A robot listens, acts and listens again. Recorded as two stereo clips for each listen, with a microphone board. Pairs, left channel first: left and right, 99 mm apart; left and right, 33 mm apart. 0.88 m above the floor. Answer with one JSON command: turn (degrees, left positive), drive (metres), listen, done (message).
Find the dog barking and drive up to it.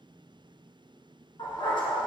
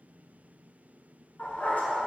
{"turn": 65}
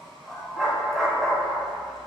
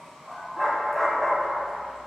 {"drive": 1.0}
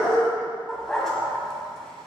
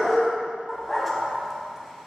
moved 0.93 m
{"drive": 1.0}
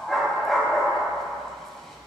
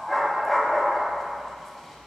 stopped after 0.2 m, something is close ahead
{"done": "I am next to the dog barking."}